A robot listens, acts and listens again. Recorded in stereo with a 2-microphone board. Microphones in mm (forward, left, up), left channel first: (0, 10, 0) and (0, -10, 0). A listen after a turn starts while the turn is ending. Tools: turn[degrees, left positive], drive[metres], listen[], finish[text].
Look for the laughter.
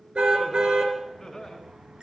Thought: The laughter: about 25° left or 155° left.
Action: turn[25]
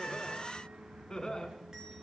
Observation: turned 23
Thought: The laughter: about 40° left or 140° left.
Action: turn[40]
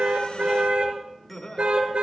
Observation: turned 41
Thought: So it is at 115° left.
Action: turn[115]
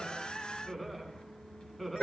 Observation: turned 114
Action: finish[Found it: laughter, straight ahead.]